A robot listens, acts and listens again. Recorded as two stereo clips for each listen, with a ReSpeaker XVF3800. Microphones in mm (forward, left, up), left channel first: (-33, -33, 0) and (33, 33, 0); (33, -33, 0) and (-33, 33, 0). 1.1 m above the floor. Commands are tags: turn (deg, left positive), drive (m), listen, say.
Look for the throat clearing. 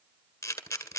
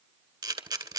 <listen/>
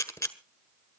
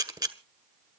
<listen/>
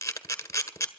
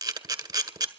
<say>I can't make out throat clearing to turn to.</say>